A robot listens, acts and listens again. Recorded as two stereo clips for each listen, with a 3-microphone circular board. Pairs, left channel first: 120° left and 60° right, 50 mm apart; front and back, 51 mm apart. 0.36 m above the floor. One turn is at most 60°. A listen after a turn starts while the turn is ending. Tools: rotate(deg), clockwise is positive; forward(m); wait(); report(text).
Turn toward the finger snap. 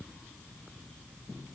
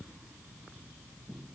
wait()
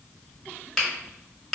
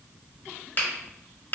rotate(-35)
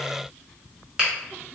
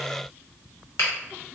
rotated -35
report("Facing the finger snap, 1 to 2 m away.")